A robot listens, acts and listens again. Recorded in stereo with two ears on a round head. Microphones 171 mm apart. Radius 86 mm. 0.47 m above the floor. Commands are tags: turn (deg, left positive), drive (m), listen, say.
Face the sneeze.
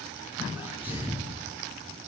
<turn deg="-30"/>
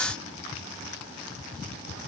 <listen/>
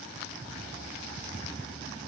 <say>I heard a sneeze, but can't make it out now. It was about 20° left or 140° right.</say>